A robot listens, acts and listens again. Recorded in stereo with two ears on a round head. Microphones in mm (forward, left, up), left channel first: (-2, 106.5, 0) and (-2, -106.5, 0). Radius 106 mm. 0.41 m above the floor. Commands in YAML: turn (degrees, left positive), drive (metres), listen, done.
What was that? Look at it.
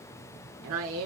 turn: -65
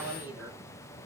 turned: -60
listen: true
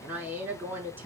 turn: -10
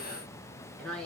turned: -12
done: "Found it: a woman speaking, straight ahead."